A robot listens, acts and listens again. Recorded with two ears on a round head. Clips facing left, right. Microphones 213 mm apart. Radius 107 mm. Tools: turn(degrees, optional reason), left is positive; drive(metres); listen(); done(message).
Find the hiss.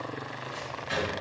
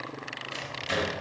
listen()
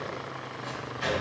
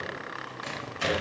listen()
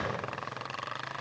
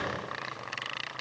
done("I can't make out a hiss, only a microwave.")